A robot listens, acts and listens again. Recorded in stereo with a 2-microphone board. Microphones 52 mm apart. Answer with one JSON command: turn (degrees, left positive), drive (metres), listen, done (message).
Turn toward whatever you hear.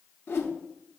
{"turn": 50}
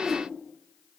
{"done": "Facing the whoosh."}